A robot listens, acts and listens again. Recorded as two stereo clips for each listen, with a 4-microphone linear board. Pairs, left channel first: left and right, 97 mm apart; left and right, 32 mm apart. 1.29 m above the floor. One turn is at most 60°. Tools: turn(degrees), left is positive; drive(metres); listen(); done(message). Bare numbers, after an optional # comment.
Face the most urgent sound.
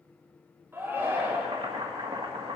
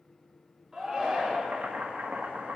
# The shout: about 25° right or 155° right.
turn(-25)
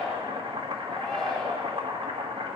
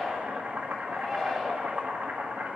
done("Facing the shout, 2 to 4 m away.")